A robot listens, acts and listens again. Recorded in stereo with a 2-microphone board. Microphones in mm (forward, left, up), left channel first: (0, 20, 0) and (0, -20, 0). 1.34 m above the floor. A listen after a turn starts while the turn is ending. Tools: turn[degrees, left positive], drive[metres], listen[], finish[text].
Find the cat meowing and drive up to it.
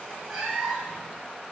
Action: turn[-30]
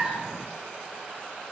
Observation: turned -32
Action: listen[]
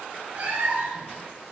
Thought: So it is at 145° right.
Action: turn[-145]
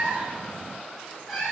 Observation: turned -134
Thought: The cat meowing is now 10° right.
Action: turn[-10]
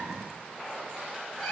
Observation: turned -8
Action: drive[1.0]
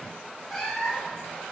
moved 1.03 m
Action: drive[1.0]
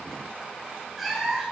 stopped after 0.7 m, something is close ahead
Action: finish[I am next to the cat meowing.]